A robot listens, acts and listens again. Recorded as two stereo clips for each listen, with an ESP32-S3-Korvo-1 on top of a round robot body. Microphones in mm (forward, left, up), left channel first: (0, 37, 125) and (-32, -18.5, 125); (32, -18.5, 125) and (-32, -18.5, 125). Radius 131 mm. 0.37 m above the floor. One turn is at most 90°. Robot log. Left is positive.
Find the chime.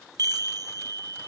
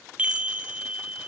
note: The chime: 110° right.
cmd yaw -90
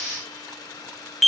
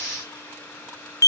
note: The chime is now 30° right.
cmd yaw -30
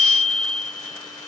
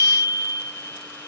note: The chime is now 25° right.
cmd yaw -25
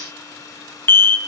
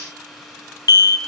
end: Facing the chime.